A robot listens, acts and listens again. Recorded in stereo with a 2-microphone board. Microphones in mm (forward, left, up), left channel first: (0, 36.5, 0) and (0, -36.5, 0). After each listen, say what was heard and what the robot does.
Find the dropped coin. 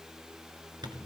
Keep listening.
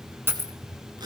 The dropped coin: about 35° right or 145° right. Turn 35° right.
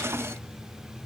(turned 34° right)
Keep listening.
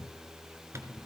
I heard a dropped coin, but can't make it out now. It was about straight ahead or 115° right.